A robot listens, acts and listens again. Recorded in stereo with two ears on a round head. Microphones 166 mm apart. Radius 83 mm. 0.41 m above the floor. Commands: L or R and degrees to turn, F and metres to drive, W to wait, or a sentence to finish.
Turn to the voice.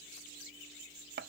W
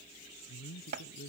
L50
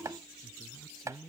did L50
Found it: a man speaking, straight ahead.